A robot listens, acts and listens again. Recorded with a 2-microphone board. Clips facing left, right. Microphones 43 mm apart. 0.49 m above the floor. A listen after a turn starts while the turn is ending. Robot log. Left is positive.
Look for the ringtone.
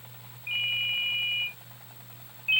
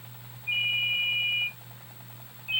note: The ringtone: about 50° left or 130° left.
cmd yaw +50
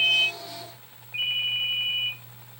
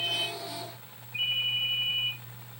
note: So it is at 75° left.
cmd yaw +75
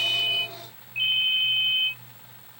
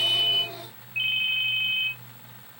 note: The ringtone is now 10° right.
cmd yaw -10
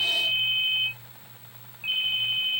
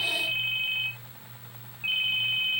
end: Facing the ringtone, 1 to 2 m away.